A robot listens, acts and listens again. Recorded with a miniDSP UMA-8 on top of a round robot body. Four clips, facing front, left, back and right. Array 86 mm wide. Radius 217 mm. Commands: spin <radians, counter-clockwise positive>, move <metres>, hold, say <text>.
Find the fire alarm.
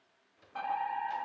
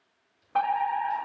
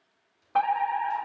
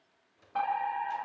spin 2.53
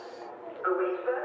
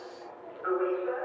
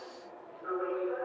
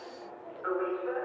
say Found it: a fire alarm, straight ahead, over 4 m away.